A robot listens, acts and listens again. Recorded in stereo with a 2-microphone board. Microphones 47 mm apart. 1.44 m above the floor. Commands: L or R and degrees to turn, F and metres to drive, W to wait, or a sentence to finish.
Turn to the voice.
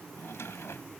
W
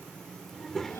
L30
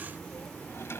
L140
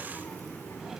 L55
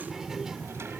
R10
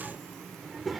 Found it: a child speaking, straight ahead.